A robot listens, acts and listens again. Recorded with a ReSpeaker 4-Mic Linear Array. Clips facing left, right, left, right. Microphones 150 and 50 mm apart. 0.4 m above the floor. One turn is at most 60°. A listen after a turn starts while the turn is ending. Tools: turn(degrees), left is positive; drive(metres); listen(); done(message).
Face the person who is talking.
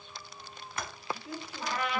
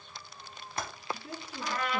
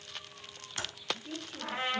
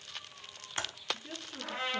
turn(degrees=-55)
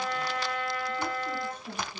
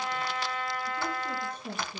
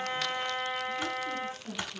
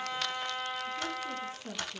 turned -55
turn(degrees=-60)
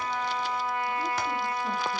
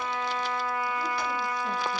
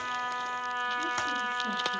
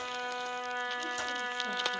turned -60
turn(degrees=-10)
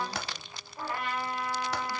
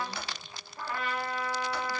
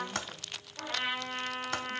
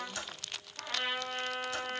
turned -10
listen()
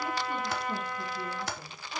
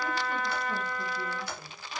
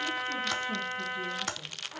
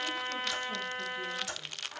done("I heard a woman speaking from this way, but can't make it out now.")